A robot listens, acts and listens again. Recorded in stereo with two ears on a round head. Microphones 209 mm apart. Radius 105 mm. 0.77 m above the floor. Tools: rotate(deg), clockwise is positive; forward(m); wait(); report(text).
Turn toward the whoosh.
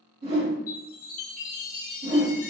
rotate(30)
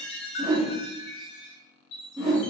report("Facing the whoosh.")